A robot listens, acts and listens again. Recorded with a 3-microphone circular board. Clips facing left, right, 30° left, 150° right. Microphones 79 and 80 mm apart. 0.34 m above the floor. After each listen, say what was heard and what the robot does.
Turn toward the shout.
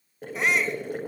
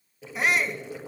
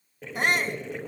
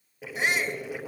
Facing the shout, 2 to 4 m away.